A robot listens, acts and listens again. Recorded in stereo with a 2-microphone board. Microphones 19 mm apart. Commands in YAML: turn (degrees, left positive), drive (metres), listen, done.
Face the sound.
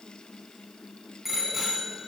turn: -30
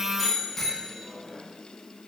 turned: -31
turn: 20
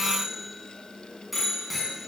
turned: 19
done: "Facing the bicycle bell."